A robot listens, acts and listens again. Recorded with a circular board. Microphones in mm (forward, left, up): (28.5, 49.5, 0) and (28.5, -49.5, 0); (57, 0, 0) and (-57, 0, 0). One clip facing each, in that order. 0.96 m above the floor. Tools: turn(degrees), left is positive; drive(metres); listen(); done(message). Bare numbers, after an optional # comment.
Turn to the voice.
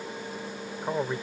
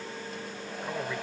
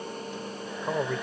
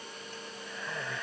# The man speaking: 35° left.
turn(35)
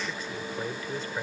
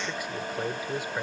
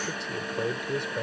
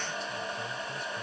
# The man speaking is now 15° right.
turn(-15)
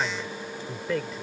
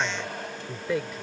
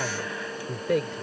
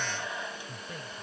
done("Found it: a man speaking, straight ahead.")